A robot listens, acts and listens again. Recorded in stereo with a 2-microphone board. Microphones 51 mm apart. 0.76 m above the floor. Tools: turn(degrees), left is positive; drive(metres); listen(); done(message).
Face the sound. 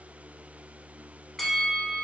turn(degrees=30)
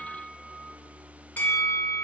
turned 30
turn(degrees=145)
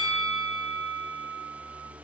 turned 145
done("Facing the bell, 1 to 2 m away.")